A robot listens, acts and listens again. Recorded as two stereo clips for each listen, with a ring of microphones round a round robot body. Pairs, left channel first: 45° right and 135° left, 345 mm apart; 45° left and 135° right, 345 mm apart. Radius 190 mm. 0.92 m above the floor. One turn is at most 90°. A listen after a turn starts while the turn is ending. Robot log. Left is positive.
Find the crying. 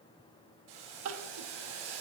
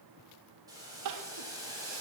note: The crying: 175° right.
cmd yaw -90
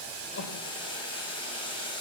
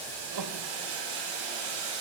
note: Nothing new. It was at 85° right.
cmd yaw -85
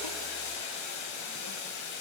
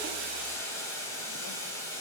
cmd idle
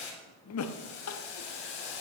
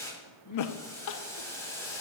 end: Found it: crying, straight ahead.